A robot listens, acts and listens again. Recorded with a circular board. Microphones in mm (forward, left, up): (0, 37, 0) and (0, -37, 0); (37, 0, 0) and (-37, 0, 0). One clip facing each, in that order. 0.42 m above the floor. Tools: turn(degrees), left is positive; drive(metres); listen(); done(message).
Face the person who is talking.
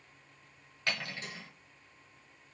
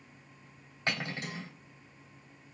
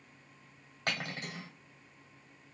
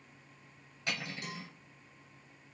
listen()
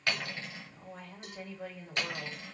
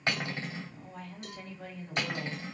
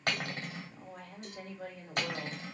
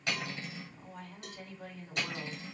turn(degrees=25)
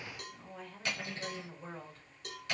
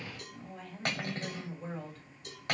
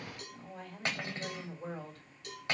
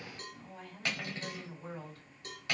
done("Facing the woman speaking, 2 to 4 m away.")